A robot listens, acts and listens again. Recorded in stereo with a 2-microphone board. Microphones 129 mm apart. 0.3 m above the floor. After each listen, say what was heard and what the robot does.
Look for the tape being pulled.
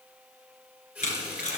Turn 90° left.
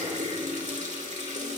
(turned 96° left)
Keep listening.
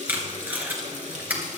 The tape being pulled is now 15° right. Turn 15° right.
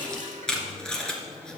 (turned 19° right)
Facing the tape being pulled, 2 to 4 m away.